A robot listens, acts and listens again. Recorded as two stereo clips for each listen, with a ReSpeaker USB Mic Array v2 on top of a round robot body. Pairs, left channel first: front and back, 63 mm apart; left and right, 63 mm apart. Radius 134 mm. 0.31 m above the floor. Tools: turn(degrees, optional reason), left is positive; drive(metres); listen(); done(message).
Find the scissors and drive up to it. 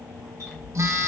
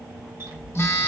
turn(degrees=-95, reason="The scissors: 95° right.")
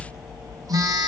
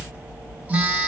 turn(degrees=-30, reason="The scissors is now 30° right.")
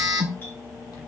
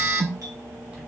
turn(degrees=-15, reason="The scissors is now 15° right.")
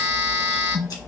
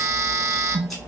drive(metres=1.0)
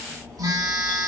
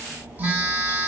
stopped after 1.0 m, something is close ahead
listen()
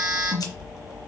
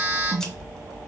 turn(degrees=10, reason="The scissors is now 10° left.")
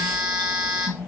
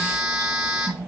listen()
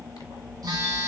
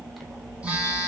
done("I am next to the scissors.")